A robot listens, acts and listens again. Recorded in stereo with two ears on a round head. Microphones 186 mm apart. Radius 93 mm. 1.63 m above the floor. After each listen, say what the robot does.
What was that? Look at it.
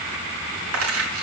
Turn 90° right.
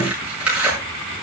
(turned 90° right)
Facing the tearing paper.